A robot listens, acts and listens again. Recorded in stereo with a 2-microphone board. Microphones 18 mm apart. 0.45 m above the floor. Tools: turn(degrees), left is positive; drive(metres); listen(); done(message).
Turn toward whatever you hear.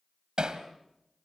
turn(degrees=-55)
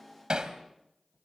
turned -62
turn(degrees=-55)
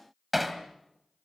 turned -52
done("Facing the hammering.")